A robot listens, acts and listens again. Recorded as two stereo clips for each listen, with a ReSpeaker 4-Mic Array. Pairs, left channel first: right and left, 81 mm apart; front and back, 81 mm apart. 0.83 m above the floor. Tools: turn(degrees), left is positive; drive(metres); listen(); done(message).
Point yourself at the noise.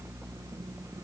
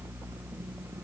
listen()
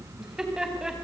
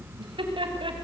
turn(degrees=175)
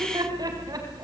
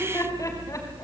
turn(degrees=50)
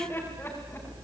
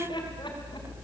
turn(degrees=-25)
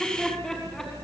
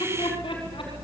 done("Facing the laughter, over 4 m away.")